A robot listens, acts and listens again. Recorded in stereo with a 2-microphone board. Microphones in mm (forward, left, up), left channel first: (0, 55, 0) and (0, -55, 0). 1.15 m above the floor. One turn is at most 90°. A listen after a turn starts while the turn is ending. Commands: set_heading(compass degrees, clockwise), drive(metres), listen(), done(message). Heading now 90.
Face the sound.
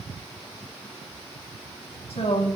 set_heading(30)
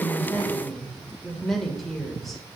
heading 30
done("Found it: a woman speaking, straight ahead, 2 to 4 m away.")